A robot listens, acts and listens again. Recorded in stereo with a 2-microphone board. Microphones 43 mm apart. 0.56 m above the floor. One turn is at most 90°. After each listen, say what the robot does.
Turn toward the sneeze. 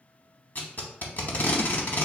Keep listening.
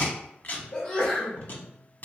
Turn 25° left.
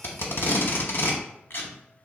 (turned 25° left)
Keep listening.
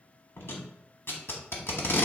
I heard a sneeze, but can't make it out now. It was about straight ahead or 130° left.